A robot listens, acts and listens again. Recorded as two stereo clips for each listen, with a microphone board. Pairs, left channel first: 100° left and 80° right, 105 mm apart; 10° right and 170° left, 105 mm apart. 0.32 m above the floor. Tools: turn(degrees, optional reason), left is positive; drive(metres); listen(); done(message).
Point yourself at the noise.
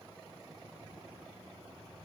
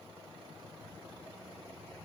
listen()
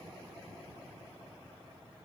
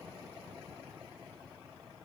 listen()
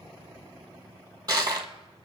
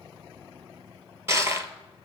turn(degrees=-125, reason="The crushing: 125° right.")
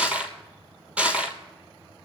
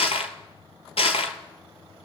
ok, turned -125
done("Facing the crushing.")